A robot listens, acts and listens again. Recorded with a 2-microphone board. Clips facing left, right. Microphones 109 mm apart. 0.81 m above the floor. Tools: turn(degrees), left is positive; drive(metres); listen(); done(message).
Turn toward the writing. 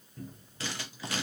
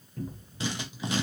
turn(degrees=-20)
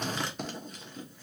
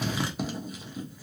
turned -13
done("Found it: writing, straight ahead, under 1 m away.")